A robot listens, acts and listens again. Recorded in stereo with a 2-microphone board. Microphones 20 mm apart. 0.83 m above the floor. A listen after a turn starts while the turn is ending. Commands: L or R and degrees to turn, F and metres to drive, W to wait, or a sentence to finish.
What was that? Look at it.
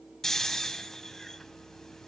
L25
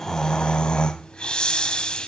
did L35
L120
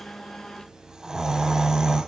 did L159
R40
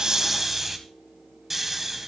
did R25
R15
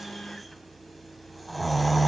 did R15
Facing the snoring, 1 to 2 m away.